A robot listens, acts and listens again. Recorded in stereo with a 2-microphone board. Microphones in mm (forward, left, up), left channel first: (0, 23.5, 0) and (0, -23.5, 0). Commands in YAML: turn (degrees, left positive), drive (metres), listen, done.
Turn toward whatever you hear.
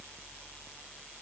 listen: true
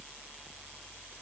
listen: true
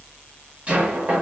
turn: -25
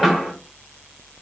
done: "Facing the knocking, under 1 m away."